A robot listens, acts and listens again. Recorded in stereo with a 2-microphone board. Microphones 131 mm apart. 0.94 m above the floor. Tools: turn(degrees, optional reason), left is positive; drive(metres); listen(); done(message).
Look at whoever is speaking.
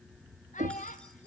turn(degrees=90)
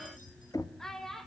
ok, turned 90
done("Found it: a child speaking, straight ahead.")